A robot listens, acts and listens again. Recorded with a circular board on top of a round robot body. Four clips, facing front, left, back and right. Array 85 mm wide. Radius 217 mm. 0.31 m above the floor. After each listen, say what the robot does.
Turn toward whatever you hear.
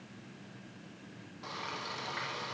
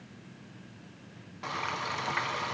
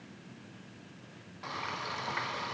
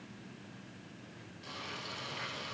Turn 105° left.
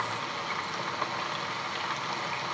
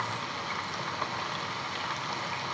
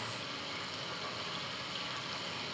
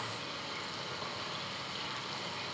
Turn 35° left.
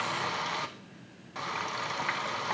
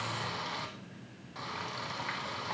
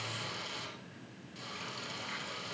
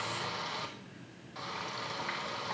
Facing the frying.